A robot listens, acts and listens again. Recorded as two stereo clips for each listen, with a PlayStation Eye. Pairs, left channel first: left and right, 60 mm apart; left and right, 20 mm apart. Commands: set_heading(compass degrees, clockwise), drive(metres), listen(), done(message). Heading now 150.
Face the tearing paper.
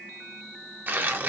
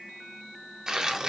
set_heading(185)
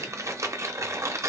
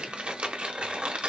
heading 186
set_heading(296)
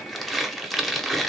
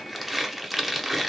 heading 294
done("Facing the tearing paper, 1 to 2 m away.")